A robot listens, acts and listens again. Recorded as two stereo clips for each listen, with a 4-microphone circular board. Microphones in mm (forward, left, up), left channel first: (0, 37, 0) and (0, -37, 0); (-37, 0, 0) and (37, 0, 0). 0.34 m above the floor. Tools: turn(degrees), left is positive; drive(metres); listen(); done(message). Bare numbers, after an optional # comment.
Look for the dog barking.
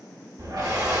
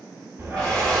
# The dog barking: 70° right.
turn(-70)
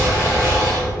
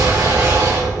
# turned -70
# The dog barking is now 15° right.
turn(-15)
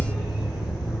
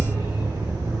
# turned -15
# The dog barking is now 10° right.
turn(-10)
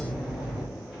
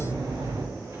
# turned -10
# The dog barking is now 10° right.
turn(-10)
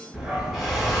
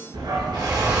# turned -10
# The dog barking is now 15° right.
turn(-15)
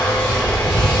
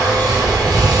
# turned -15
done("Found it: a dog barking, straight ahead.")